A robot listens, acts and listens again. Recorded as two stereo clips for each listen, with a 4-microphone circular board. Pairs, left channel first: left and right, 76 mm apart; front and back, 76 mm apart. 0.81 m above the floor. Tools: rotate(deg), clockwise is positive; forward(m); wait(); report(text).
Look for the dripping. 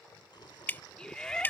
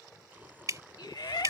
rotate(-150)
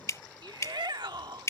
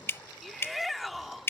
rotate(-50)
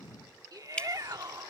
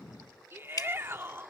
rotate(-15)
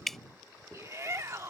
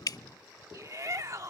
report("Found it: dripping, straight ahead.")